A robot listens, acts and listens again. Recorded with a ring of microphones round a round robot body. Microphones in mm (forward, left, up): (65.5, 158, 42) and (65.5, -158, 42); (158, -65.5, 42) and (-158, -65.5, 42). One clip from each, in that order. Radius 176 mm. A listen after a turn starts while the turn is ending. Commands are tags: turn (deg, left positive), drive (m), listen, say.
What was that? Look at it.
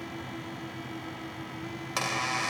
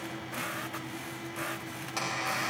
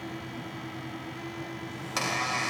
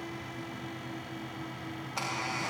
<turn deg="35"/>
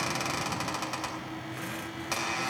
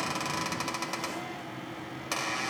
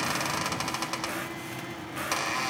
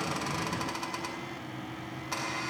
<turn deg="-10"/>
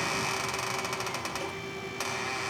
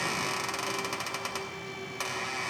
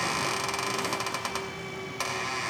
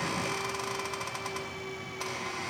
<say>Found it: a squeak, straight ahead.</say>